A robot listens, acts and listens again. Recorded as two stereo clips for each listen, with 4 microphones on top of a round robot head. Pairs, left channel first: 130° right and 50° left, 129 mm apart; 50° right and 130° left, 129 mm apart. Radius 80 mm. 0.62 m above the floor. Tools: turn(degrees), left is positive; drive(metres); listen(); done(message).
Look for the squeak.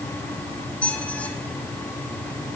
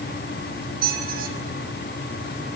turn(degrees=150)
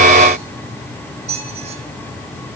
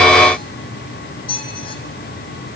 done("Facing the squeak, 2 to 4 m away.")